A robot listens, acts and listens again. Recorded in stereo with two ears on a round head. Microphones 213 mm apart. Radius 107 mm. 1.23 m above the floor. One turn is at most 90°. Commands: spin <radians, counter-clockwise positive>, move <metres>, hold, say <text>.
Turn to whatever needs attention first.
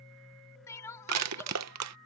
spin 0.52
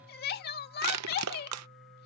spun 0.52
spin 1.57
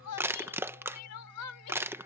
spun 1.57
spin 1.31
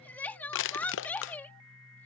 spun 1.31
spin 0.17
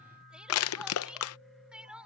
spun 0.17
say Found it: crying, straight ahead.